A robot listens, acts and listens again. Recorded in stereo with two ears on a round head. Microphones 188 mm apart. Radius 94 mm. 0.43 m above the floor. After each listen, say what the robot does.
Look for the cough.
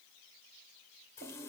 Keep listening.
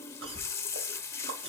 Turn 25° right.
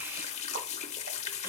Keep listening.
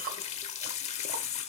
Keep listening.
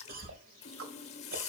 Turn 125° right.
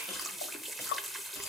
Turn 15° left.
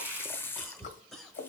Found it: a cough, straight ahead.